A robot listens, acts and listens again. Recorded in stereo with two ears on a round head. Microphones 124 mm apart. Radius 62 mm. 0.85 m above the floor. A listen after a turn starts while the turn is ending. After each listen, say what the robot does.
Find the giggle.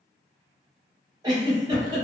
Turn 25° right.
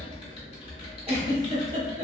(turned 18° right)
Turn 135° right.
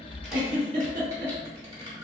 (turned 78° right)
Turn 60° right.
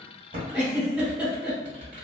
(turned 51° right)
Turn 10° right.
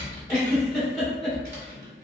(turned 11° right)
Facing the giggle, 1 to 2 m away.